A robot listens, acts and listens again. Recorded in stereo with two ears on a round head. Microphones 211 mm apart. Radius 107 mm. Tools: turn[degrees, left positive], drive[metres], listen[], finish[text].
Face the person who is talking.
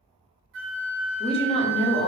Thought: The woman speaking: about 25° left or 155° left.
Action: turn[25]
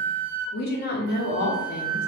Thought: So it is at 130° left.
Action: turn[130]
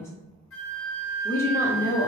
Thought: The woman speaking is now 15° left.
Action: turn[15]
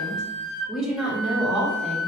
Action: finish[Found it: a woman speaking, straight ahead.]